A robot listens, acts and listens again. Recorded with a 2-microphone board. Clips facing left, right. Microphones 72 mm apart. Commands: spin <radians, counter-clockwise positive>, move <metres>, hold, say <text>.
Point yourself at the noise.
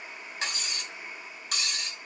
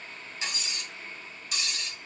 spin 1.05
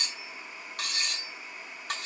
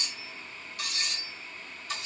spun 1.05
spin 1.05
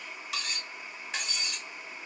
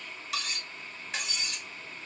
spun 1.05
say Facing the cutlery clinking, 1 to 2 m away.